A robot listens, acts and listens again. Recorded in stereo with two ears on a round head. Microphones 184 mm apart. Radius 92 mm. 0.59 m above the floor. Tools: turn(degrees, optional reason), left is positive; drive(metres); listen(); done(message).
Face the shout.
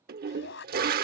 turn(degrees=60, reason="The shout: about 60° left or 120° left.")
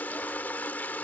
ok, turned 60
listen()
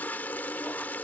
listen()
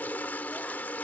done("I heard a shout, but can't make it out now. It was about straight ahead or 60° left.")